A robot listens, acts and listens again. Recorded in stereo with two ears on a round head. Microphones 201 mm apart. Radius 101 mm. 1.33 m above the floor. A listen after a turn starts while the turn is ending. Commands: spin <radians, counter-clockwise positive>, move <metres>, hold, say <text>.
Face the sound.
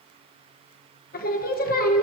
spin 0.70
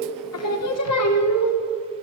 spin 1.66
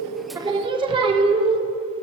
spin -0.35
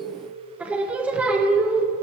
say Facing the singing.